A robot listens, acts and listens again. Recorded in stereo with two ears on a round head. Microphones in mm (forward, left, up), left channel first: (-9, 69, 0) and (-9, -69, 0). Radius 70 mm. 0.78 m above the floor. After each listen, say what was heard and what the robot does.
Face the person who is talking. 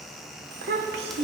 Turn 90° right.
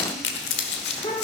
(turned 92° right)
So it is at 35° left. Turn 35° left.
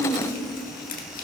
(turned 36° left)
The child speaking is now 10° left. Turn 10° left.
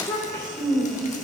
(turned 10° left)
The child speaking is now 25° left. Turn 25° left.
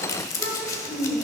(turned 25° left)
The child speaking is now 10° left. Turn 10° left.
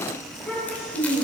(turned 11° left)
Facing the child speaking, 2 to 4 m away.